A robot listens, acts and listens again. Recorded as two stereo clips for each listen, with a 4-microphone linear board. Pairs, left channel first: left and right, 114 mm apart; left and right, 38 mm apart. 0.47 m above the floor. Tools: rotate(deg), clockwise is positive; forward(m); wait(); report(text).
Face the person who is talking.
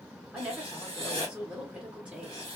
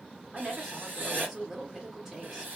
rotate(30)
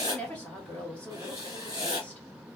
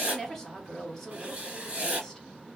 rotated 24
rotate(-15)
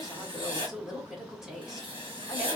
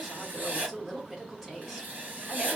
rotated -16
report("Found it: a woman speaking, straight ahead, 1 to 2 m away.")